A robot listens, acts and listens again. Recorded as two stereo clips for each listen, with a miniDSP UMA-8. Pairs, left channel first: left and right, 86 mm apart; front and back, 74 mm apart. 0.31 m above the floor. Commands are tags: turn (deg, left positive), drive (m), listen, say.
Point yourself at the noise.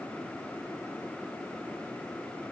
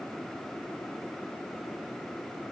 <listen/>
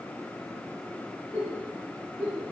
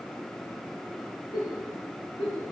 <turn deg="15"/>
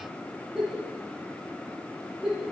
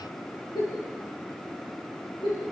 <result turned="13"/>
<say>Found it: a giggle, straight ahead, over 4 m away.</say>